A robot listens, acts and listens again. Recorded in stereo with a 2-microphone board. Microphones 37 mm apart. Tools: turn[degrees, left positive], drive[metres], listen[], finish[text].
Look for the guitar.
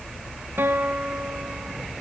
Action: turn[-90]
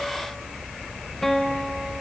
Thought: So it is at 10° left.
Action: turn[10]
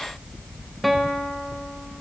Action: finish[Facing the guitar.]